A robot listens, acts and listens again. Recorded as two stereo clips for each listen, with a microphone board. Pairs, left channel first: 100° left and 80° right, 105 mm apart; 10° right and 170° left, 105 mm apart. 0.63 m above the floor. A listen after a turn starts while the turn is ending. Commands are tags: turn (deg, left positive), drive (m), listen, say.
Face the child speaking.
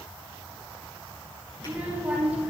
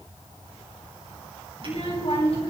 <say>Facing the child speaking, over 4 m away.</say>